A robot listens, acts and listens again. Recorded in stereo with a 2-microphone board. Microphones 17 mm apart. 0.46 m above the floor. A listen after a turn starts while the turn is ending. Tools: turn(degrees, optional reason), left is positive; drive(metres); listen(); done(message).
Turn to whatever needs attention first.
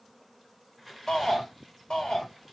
turn(degrees=60, reason="The shout: about 60° left or 120° left.")
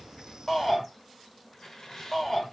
turn(degrees=25, reason="So it is at 25° left.")
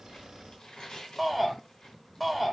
turn(degrees=10, reason="The shout is now 10° left.")
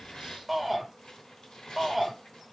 done("Found it: a shout, straight ahead.")